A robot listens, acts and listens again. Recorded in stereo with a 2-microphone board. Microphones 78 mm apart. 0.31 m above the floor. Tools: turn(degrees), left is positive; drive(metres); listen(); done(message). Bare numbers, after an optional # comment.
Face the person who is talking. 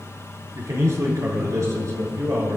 # The man speaking: about 40° right or 140° right.
turn(-40)
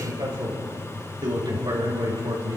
# So it is at 95° right.
turn(-95)
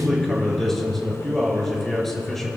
done("Found it: a man speaking, straight ahead.")